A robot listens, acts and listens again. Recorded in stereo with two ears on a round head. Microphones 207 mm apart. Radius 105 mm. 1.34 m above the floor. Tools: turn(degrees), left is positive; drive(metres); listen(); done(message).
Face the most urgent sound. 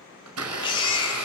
turn(degrees=20)
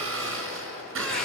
listen()
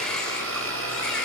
listen()
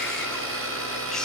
done("I heard a baby crying, but can't make it out now. It was about straight ahead or 140° left.")